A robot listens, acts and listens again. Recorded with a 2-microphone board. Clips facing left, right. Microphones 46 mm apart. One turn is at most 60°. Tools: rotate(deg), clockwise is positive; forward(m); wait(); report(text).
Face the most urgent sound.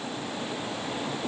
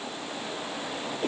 wait()
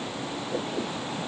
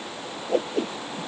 wait()
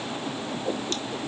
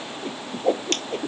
report("I can't make out anything urgent to turn to.")